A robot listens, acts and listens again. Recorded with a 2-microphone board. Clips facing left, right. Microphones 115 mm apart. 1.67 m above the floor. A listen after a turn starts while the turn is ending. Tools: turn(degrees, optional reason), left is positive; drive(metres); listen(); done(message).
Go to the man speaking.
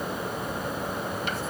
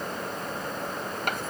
listen()
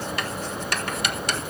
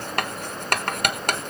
listen()
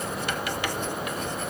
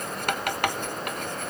done("I can't make out a man speaking, only writing.")